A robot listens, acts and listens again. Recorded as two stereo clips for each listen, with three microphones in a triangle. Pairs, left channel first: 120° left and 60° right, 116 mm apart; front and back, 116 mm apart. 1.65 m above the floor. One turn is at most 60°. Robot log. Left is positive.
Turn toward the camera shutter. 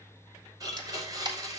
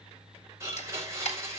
note: The camera shutter: 10° right.
cmd yaw -10
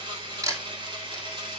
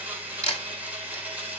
end: Found it: a camera shutter, straight ahead.